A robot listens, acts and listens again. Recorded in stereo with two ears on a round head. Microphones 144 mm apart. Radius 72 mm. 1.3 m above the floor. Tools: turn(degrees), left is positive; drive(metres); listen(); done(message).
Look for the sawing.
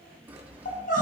turn(degrees=-30)
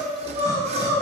turn(degrees=-140)
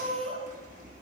turn(degrees=-50)
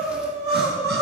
listen()
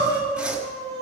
done("Facing the sawing, 1 to 2 m away.")